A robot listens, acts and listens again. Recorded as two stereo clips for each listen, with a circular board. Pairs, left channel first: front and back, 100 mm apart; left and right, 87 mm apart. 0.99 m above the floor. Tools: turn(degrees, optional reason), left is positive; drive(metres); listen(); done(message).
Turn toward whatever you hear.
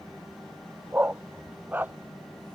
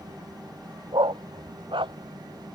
turn(degrees=-110, reason="The dog barking: 110° right.")
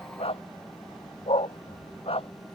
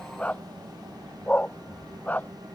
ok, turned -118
turn(degrees=20, reason="The dog barking is now 20° left.")
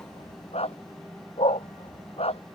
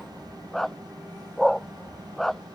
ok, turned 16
done("Facing the dog barking.")